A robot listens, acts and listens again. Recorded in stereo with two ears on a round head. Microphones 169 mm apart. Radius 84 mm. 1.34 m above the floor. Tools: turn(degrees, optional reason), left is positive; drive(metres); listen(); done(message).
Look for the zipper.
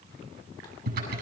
listen()
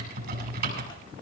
listen()
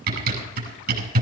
done("I can't make out a zipper to turn to.")